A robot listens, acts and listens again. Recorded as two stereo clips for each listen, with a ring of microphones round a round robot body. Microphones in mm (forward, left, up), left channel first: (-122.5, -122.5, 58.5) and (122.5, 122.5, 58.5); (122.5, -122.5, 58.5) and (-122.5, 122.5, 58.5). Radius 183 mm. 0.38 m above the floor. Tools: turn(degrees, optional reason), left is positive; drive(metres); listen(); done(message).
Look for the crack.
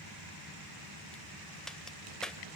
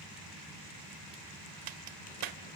turn(degrees=135, reason="The crack: 135° left.")
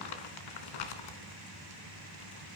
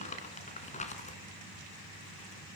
done("Facing where the crack came from. I can't hear it now.")